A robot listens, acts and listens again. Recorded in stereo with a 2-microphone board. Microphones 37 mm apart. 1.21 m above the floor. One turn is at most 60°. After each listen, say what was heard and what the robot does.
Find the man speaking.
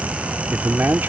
Turn 60° right.
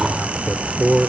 So it is at 30° right. Turn 30° right.
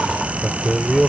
Facing the man speaking.